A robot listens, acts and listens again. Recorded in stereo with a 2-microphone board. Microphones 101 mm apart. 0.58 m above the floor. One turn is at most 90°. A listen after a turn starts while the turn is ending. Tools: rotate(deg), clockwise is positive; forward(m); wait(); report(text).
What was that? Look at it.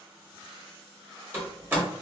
rotate(20)
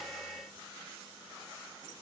wait()
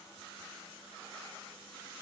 report("I heard a door slam, but can't make it out now. It was about straight ahead or 140° right.")